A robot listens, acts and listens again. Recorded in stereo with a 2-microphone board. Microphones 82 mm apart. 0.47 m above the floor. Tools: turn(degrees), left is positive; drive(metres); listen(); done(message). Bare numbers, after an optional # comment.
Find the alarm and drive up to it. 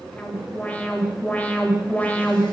# The alarm: about 20° left or 160° left.
turn(20)
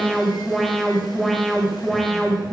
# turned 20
drive(1.0)
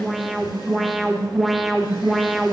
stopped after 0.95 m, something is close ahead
done("Arrived at the alarm, straight ahead.")